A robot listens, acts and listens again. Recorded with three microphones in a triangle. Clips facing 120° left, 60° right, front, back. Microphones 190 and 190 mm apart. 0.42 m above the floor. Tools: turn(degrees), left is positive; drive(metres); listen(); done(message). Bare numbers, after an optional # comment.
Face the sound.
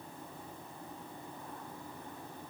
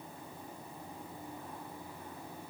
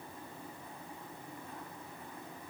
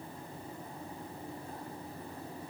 listen()
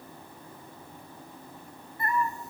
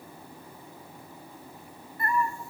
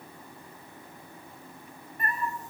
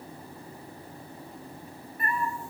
# The cat meowing: 50° left.
turn(50)
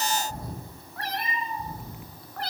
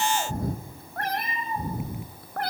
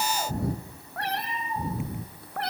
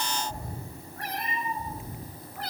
# The cat meowing is now 25° right.
turn(-25)
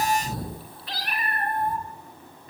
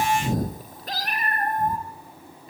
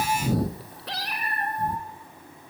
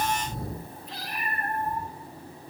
# The cat meowing is now 15° right.
turn(-15)
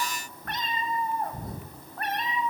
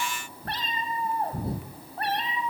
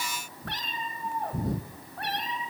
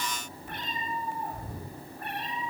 done("Facing the cat meowing.")